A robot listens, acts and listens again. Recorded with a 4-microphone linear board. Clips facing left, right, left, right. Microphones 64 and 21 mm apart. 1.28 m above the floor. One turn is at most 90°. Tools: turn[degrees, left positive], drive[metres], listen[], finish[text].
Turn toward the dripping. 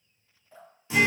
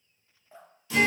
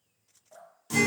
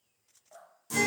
Thought: The dripping: about 25° right or 155° right.
Action: turn[-25]
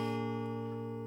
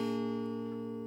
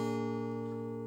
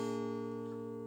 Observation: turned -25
Action: listen[]
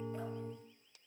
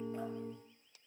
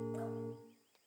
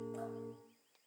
Action: listen[]
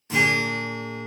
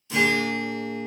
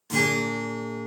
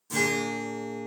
Action: finish[I heard dripping, but can't make it out now. It was about straight ahead or 130° right.]